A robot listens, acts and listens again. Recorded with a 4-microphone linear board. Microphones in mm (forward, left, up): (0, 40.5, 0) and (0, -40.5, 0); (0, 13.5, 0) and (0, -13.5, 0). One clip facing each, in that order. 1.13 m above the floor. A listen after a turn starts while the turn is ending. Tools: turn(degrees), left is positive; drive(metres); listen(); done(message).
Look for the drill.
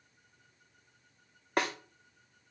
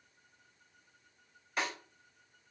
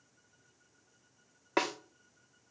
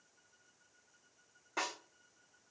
listen()
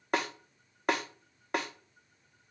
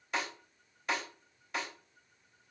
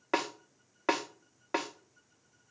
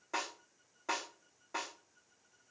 listen()
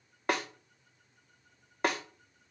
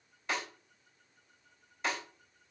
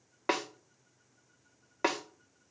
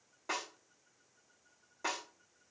done("I can't make out a drill to turn to.")